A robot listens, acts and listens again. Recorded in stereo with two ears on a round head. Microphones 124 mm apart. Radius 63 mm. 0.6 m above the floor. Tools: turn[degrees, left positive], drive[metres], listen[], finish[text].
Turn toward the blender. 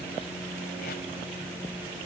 Action: listen[]
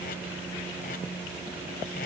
Action: listen[]
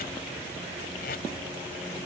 Action: finish[I can't make out a blender to turn to.]